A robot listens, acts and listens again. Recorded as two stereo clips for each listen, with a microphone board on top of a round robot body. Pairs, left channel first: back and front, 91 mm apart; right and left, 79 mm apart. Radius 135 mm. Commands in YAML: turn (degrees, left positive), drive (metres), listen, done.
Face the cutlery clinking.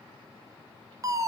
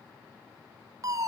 listen: true
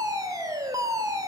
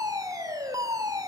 listen: true
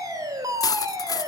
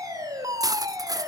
turn: 130
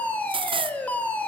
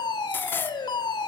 turn: -25
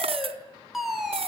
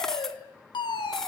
done: "Found it: cutlery clinking, straight ahead, under 1 m away."